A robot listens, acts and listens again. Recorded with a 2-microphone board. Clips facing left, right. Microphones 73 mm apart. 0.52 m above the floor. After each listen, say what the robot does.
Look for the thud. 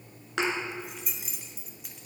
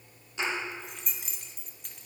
Turn 90° left.
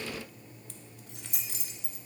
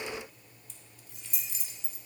I heard a thud from this way, but can't make it out now.